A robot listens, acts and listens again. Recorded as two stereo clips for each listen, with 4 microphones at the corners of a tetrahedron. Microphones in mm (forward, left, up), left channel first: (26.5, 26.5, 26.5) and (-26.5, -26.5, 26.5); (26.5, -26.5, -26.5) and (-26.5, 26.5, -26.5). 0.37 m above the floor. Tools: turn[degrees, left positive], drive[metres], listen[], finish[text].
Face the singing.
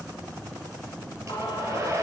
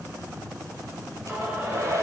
Thought: The singing: 60° left.
Action: turn[60]
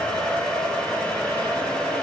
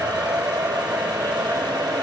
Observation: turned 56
Action: listen[]
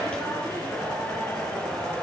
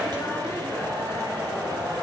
Thought: The singing is now 20° right.
Action: turn[-20]
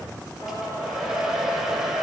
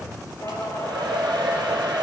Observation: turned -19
Action: finish[Found it: singing, straight ahead, over 4 m away.]